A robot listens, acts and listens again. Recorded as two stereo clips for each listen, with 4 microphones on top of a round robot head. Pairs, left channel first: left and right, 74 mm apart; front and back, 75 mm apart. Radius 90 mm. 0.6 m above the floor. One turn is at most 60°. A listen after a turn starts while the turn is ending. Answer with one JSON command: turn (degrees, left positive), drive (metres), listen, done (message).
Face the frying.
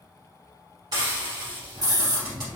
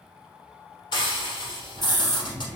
{"turn": -40}
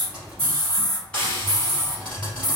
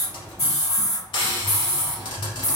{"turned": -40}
{"turn": 10}
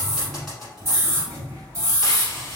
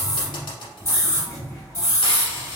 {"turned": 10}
{"done": "Facing the frying, 1 to 2 m away."}